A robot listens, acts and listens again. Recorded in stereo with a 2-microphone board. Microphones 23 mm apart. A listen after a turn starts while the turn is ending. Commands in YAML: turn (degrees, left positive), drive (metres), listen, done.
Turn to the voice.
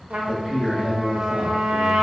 turn: -25
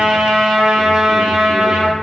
listen: true
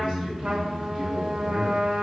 turn: -120
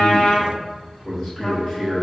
turn: 25
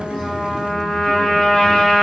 listen: true
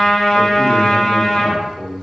done: "Facing the man speaking, 1 to 2 m away."